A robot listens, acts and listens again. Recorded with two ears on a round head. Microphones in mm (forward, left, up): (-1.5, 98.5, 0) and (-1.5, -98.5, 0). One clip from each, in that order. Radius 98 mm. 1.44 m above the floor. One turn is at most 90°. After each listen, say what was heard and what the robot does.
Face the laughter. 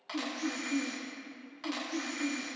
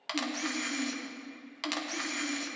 The laughter: about 75° left or 105° left. Turn 75° left.
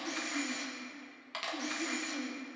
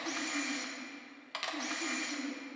So it is at 25° left. Turn 25° left.
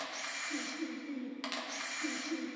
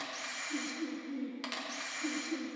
The laughter is now 15° left. Turn 15° left.
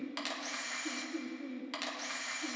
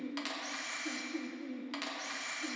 Found it: laughter, straight ahead, over 4 m away.